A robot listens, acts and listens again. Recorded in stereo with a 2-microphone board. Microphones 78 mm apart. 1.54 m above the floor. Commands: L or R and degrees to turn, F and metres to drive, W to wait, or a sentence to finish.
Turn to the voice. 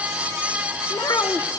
L55
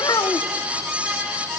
L65
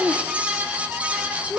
L15
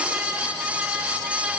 W
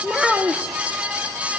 Found it: a child speaking, straight ahead.